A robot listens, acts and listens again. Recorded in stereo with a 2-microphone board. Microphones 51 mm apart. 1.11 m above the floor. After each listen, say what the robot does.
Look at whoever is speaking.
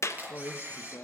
Turn 45° left.
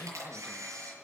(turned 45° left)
Found it: a man speaking, straight ahead, 1 to 2 m away.